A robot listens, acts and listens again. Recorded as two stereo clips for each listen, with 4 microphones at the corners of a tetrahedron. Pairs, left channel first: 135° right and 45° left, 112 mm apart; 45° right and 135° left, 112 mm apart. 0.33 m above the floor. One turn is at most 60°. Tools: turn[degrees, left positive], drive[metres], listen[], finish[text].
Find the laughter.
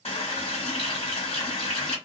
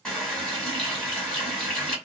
Action: listen[]
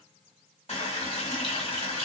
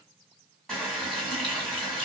Action: listen[]
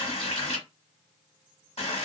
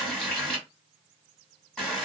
Action: finish[I can't make out laughter to turn to.]